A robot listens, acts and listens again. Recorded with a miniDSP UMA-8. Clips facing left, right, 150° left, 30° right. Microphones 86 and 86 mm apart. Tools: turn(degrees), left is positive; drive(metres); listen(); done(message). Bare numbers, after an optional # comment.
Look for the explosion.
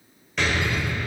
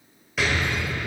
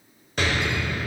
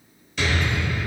# The explosion: 175° right.
turn(-175)
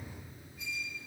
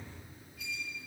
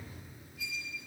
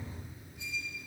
done("I heard an explosion from this way, but can't make it out now.")